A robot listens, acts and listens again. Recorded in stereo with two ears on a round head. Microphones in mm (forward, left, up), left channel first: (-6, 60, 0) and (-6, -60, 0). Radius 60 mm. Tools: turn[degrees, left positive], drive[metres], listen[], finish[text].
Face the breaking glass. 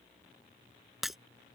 Action: turn[30]
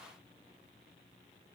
Action: listen[]
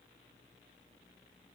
Action: finish[I heard breaking glass, but can't make it out now. It was about 30° right or 150° left.]